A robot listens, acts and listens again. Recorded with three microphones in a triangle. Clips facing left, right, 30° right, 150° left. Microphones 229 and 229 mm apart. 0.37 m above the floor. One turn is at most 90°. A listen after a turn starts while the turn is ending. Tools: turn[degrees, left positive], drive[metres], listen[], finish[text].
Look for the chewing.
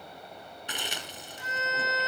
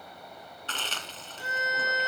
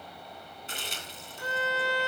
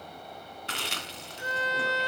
Thought: The chewing: 165° left.
Action: turn[90]
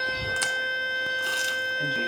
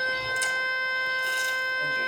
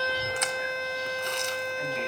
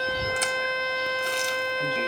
Thought: Nothing new. It was at 75° left.
Action: turn[75]
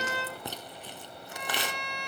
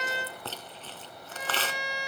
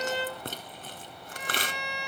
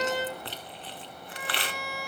Thought: The chewing is now 15° left.
Action: turn[15]
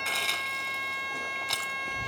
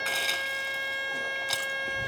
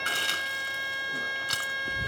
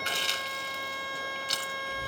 Action: finish[Found it: chewing, straight ahead, 2 to 4 m away.]